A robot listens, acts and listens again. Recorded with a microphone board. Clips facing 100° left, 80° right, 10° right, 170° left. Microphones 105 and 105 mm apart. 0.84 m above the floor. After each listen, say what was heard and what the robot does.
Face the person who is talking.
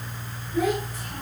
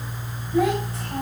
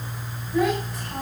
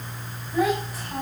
The child speaking: 105° right. Turn 105° right.
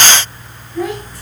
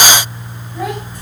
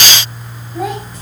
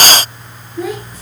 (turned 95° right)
The child speaking is now 10° right. Turn 10° right.
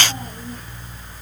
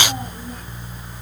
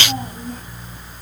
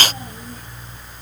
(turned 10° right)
Keep listening.
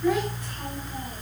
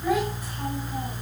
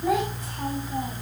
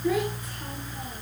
Keep listening.
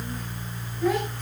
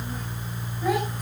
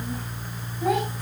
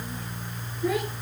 I heard a child speaking from this way, but can't make it out now.